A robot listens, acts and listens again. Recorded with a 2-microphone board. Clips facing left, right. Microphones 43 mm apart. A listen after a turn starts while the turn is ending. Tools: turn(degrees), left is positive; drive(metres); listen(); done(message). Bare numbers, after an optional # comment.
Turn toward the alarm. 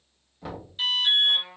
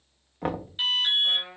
# The alarm: about 25° right or 155° right.
turn(-25)
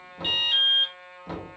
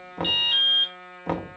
done("Facing the alarm.")